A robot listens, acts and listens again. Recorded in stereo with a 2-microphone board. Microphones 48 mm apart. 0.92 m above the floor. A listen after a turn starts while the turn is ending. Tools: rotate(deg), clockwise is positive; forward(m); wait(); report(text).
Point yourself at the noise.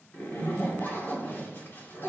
rotate(-50)
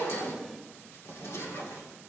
rotate(-80)
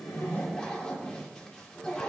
rotate(-20)
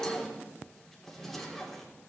report("Facing the zipper, 2 to 4 m away.")